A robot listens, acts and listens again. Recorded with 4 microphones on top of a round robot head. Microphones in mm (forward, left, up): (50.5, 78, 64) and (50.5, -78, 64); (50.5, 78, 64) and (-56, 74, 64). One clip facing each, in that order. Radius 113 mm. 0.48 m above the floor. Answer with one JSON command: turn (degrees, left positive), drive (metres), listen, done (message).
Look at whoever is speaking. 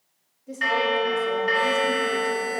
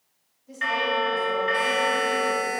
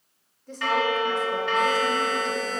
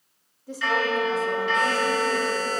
{"turn": 100}
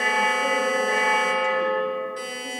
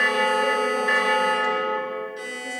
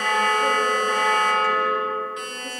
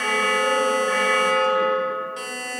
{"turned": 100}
{"listen": true}
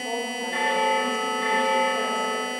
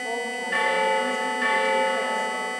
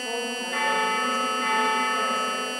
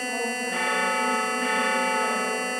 {"listen": true}
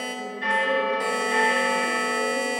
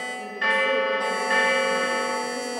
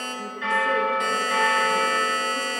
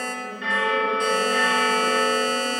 {"done": "I heard a woman speaking from this way, but can't make it out now."}